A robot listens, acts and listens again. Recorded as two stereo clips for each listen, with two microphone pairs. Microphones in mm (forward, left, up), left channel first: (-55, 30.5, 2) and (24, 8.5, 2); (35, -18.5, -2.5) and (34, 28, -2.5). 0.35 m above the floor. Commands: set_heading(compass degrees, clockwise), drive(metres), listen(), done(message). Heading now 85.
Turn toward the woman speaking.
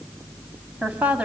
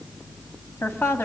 set_heading(170)
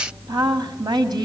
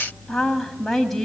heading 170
done("Found it: a woman speaking, straight ahead, 1 to 2 m away.")